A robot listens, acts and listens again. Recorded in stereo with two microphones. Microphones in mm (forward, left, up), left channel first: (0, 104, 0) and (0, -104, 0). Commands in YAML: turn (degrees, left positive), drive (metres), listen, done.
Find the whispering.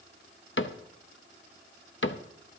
listen: true
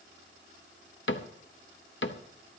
listen: true
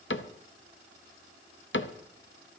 done: "I can't make out whispering to turn to."